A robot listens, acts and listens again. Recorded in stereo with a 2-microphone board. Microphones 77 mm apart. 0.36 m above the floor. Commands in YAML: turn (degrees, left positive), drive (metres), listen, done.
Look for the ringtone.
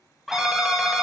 turn: -30
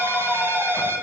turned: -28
turn: -145
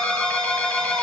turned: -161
turn: 15
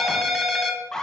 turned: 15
done: "Facing the ringtone."